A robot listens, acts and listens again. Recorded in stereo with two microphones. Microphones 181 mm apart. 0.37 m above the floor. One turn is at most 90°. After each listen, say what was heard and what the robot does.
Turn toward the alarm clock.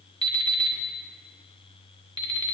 The alarm clock: about 25° right or 155° right. Turn 25° right.
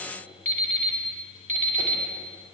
So it is at 125° right. Turn 90° right.
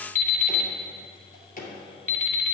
The alarm clock is now 50° right. Turn 50° right.
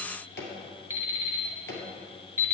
The alarm clock is now 15° right. Turn 15° right.
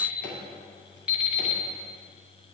Found it: an alarm clock, straight ahead, 1 to 2 m away.